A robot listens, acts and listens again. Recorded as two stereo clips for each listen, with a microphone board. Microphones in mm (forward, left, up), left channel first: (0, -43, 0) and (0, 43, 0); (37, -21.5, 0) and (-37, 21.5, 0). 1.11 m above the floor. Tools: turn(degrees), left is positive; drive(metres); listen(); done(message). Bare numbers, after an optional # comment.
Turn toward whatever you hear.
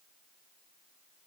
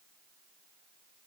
listen()
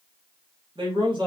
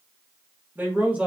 # The man speaking: 75° left.
turn(75)
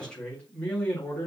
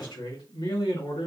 # The man speaking is now 20° right.
turn(-20)
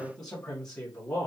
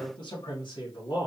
# The man speaking is now 15° right.
turn(-15)
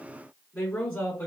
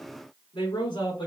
# The man speaking is now 10° right.
turn(-10)
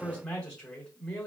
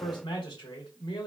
done("Found it: a man speaking, straight ahead, 2 to 4 m away.")